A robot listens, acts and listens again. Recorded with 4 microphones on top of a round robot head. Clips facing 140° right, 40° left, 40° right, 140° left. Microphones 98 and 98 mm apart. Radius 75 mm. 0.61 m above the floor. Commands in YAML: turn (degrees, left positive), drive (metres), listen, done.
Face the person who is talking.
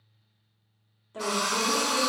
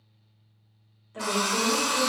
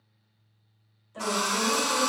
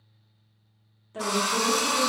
turn: 155
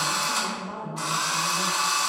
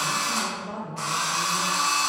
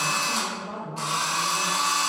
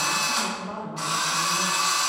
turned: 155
turn: 10
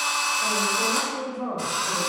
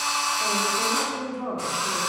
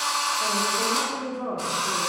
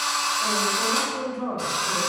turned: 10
done: "Facing the woman speaking."